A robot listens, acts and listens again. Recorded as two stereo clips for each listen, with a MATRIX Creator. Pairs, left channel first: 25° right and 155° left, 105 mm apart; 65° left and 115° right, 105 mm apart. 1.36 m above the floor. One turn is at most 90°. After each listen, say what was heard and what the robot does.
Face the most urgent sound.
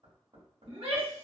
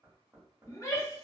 The shout: 125° left. Turn 90° left.
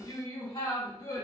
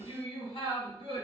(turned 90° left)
The shout is now 35° left. Turn 35° left.
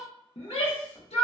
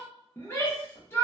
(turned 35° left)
Facing the shout, 1 to 2 m away.